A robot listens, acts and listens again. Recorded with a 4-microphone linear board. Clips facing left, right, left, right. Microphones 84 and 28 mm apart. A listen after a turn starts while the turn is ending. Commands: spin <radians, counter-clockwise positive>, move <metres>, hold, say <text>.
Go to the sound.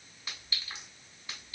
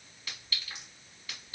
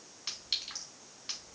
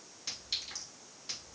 spin 0.52
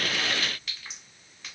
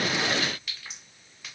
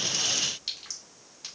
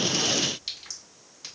move 1.0
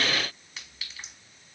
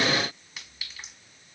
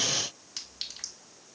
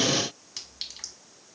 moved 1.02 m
move 1.0
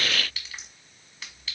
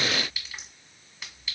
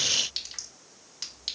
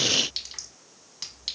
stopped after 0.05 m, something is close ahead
say Arrived at the clink, straight ahead.